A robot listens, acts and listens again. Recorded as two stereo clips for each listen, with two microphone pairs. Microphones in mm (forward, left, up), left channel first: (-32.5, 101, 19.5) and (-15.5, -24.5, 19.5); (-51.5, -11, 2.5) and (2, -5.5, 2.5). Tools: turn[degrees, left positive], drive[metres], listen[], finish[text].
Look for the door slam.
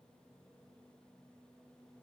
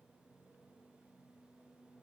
Action: listen[]
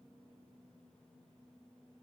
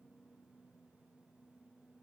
Action: listen[]
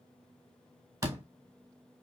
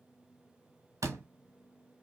Thought: The door slam: 15° right.
Action: turn[-15]
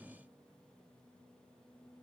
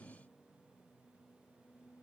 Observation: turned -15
Action: finish[I heard a door slam from this way, but can't make it out now.]